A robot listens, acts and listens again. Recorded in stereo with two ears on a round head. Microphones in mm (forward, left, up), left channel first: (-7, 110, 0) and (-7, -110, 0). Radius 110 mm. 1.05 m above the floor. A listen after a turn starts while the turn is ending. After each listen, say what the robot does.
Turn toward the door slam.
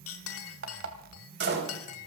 Turn 50° right.
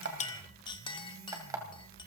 Keep listening.
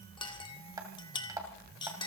I heard a door slam, but can't make it out now. It was about straight ahead or 80° right.